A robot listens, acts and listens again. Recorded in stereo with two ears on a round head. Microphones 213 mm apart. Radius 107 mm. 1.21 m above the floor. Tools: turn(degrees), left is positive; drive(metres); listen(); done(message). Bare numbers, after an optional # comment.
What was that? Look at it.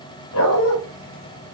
# The dog barking: about 60° left or 120° left.
turn(60)
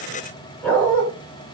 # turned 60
done("Facing the dog barking.")